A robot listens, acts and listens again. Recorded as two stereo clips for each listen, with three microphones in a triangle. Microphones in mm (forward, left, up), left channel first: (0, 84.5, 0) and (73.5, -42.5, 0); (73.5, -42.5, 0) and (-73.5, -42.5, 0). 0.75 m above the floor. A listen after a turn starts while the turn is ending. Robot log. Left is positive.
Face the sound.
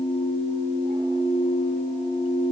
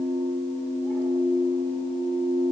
cmd idle
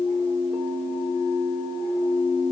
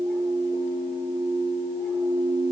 cmd idle
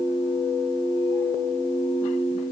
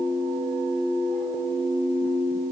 end: I can't make out anything.